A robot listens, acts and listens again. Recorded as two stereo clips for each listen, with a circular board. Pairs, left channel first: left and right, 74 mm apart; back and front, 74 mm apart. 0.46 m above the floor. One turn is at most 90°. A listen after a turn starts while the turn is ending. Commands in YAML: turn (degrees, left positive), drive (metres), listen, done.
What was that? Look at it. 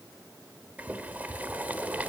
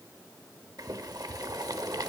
turn: -25
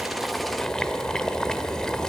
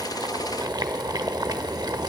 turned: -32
turn: 10
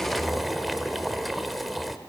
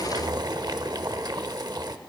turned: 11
done: "Facing the boiling."